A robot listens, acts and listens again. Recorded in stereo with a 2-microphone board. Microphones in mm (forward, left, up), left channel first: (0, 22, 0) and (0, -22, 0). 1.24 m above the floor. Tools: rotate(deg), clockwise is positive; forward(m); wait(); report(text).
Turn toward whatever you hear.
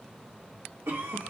rotate(65)
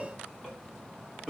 rotate(15)
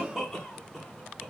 report("Found it: a cough, straight ahead, 1 to 2 m away.")